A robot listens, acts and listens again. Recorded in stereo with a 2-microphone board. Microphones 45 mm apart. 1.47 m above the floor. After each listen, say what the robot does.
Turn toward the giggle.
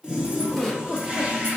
Turn 30° left.
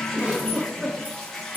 Turn 25° right.
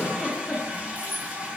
Turn 10° left.
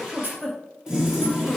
Found it: a giggle, straight ahead, under 1 m away.